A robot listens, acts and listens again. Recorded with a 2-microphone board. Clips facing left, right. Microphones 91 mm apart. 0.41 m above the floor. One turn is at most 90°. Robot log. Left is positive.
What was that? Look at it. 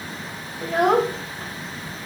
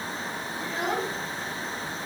note: The child speaking: about 55° left or 125° left.
cmd yaw +55
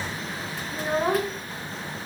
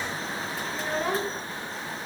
note: So it is at 30° left.
cmd yaw +30
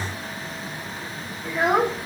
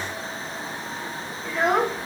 end: Found it: a child speaking, straight ahead.